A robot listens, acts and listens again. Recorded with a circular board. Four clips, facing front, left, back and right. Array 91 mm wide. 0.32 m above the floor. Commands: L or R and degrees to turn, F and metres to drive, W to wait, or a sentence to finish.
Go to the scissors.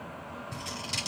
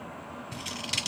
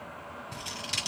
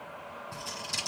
L105
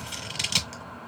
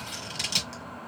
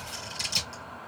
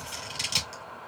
F1.0
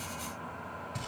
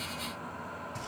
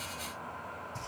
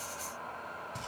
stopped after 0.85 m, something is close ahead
W
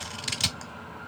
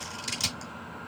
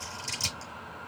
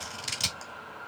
R10
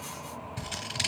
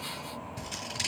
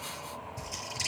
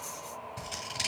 Arrived at the scissors, straight ahead.